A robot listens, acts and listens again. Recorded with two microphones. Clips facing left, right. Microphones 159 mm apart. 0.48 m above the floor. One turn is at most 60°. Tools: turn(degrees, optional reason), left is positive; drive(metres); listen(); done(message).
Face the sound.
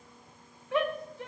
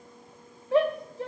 turn(degrees=-35, reason="The shout: about 35° right or 145° right.")
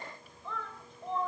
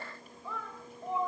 turn(degrees=-10, reason="So it is at 10° right.")
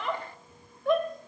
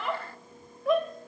done("Found it: a shout, straight ahead, 2 to 4 m away.")